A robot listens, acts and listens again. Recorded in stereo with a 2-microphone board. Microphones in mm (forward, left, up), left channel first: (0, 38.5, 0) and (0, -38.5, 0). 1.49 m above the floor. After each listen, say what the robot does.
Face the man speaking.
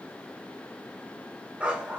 Keep listening.
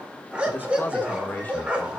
Turn 20° left.
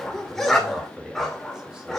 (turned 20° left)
Facing the man speaking, 2 to 4 m away.